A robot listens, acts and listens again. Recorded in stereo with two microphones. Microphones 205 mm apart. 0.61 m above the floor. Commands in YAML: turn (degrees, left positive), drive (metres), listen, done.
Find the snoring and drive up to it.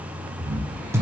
turn: -45
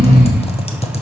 drive: 1.0
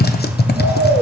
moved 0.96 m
turn: -15
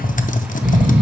drive: 1.0
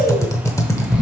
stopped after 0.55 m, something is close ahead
done: "I am next to the snoring."